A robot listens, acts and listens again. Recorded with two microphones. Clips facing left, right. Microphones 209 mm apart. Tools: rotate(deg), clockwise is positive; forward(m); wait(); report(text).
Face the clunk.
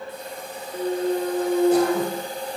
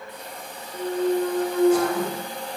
rotate(-25)
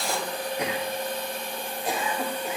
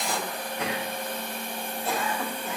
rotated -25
wait()
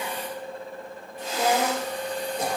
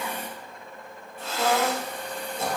report("I heard a clunk, but can't make it out now. It was about straight ahead or 130° left.")